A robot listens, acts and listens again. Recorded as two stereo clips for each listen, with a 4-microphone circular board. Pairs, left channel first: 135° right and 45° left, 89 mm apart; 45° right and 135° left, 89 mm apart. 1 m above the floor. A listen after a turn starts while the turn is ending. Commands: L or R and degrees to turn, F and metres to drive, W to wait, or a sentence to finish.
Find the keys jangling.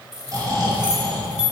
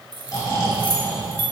L125
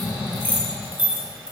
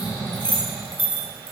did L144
R30
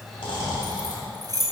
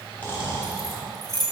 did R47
Facing the keys jangling.